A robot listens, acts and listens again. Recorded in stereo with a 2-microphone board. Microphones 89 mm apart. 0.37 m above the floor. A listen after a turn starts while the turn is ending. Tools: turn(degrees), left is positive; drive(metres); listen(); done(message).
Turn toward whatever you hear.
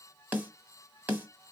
turn(degrees=-20)
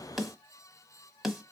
done("Found it: a snare drum, straight ahead, 1 to 2 m away.")